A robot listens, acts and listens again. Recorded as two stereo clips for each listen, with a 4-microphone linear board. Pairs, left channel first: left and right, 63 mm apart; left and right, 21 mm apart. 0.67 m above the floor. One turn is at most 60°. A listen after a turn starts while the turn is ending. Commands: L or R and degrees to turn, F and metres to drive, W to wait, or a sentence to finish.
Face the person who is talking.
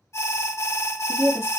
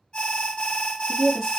R30
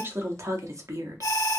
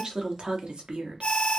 R60
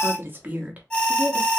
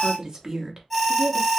R30
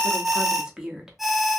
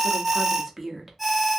R15
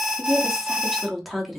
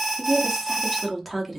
Found it: a woman speaking, straight ahead.